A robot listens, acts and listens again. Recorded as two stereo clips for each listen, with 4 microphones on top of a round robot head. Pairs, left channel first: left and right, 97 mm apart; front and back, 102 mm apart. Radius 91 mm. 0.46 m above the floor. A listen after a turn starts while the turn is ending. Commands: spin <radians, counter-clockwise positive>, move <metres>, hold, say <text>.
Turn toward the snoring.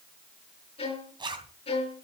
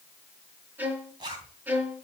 hold
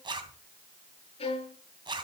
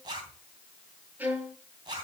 hold
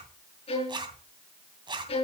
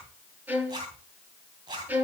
say I can't make out snoring to turn to.